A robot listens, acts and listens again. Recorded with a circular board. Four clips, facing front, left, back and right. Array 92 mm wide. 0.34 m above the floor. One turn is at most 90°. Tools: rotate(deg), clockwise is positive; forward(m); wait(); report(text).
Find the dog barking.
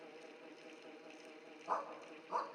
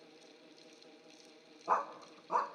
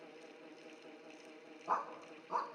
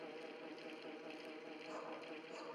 rotate(-90)
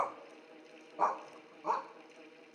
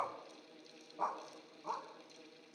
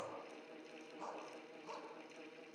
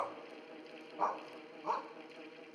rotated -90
rotate(20)
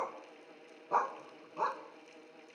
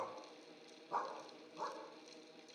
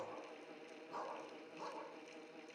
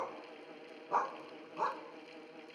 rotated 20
rotate(30)
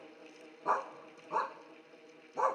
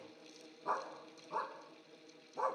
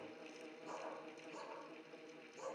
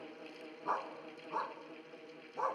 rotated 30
report("Found it: a dog barking, straight ahead, 1 to 2 m away.")